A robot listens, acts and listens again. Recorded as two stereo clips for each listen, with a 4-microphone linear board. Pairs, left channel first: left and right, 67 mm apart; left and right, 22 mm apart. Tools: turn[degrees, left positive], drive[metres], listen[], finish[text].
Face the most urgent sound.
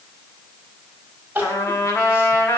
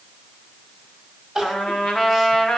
Thought: The crying: about 25° right or 155° right.
Action: turn[-25]
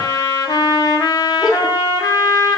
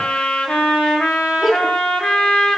Action: finish[Found it: crying, straight ahead.]